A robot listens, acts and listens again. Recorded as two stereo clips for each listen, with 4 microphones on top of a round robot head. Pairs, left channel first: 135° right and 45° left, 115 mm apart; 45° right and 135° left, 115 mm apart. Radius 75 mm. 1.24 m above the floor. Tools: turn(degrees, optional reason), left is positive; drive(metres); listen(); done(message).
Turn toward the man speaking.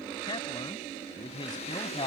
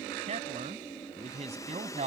turn(degrees=175, reason="The man speaking: 175° left.")
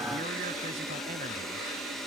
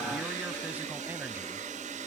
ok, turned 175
listen()
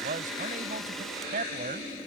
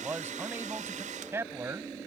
turn(degrees=65, reason="The man speaking is now 65° left.")
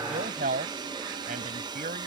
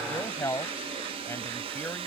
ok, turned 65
turn(degrees=30, reason="The man speaking is now 30° left.")
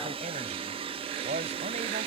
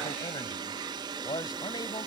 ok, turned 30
turn(degrees=15, reason="The man speaking is now 15° left.")
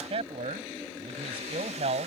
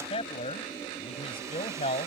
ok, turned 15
done("Facing the man speaking.")